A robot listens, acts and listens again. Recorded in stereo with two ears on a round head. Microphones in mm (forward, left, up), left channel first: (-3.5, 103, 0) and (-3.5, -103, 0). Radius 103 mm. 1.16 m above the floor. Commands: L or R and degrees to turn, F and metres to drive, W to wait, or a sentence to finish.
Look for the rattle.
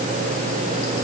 W
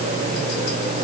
W
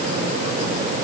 I can't make out a rattle to turn to.